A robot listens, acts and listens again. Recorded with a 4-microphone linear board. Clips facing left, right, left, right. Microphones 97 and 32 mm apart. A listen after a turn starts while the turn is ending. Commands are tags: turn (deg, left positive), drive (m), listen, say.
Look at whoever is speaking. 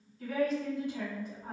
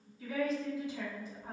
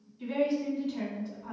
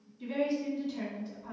<turn deg="60"/>
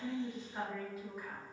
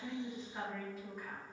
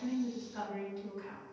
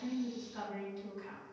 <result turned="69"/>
<turn deg="10"/>
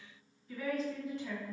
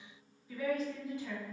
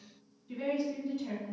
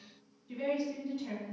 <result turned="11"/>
<say>Found it: a woman speaking, straight ahead, 1 to 2 m away.</say>